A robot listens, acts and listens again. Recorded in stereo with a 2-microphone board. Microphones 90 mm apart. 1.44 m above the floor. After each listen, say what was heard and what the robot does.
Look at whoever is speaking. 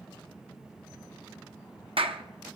Keep listening.
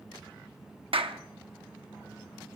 Keep listening.
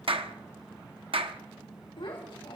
The child speaking: about 70° left or 110° left. Turn 70° left.
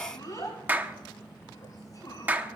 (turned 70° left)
So it is at 45° left. Turn 45° left.
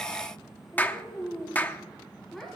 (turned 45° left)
Facing the child speaking, over 4 m away.